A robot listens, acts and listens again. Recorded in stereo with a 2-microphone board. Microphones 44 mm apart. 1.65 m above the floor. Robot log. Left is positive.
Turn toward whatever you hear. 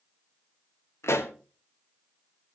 cmd yaw +90
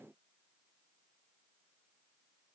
end: I heard a pop from this way, but can't make it out now.